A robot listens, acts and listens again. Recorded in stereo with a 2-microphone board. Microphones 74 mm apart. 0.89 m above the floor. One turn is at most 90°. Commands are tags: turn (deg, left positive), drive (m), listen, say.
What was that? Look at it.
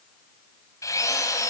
<turn deg="45"/>
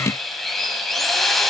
<say>Facing the drill.</say>